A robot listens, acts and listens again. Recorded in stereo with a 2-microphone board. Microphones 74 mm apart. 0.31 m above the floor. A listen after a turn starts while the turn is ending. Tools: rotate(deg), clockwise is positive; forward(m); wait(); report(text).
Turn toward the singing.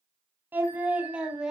rotate(30)
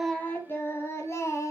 rotate(-45)
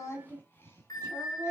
rotate(-40)
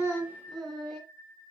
rotate(-10)
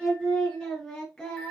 rotate(-10)
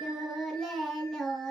report("Facing the singing, 2 to 4 m away.")